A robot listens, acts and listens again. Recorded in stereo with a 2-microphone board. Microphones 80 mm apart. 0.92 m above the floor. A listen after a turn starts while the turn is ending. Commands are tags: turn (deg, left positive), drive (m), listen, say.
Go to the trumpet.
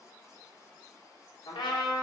<turn deg="90"/>
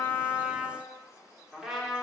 <drive m="1.0"/>
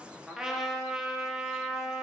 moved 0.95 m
<drive m="1.0"/>
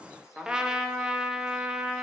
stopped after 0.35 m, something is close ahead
<turn deg="-10"/>
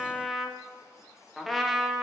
<say>I am next to the trumpet.</say>